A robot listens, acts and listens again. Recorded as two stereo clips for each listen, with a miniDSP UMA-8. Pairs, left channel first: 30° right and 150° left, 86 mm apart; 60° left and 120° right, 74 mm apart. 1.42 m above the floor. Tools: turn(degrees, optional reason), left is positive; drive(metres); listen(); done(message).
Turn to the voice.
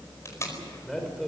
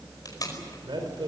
turn(degrees=-115, reason="The man speaking: 115° right.")
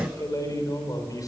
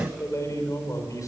turn(degrees=15, reason="The man speaking is now 15° left.")
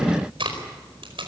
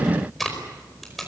listen()
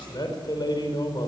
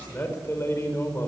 done("Found it: a man speaking, straight ahead.")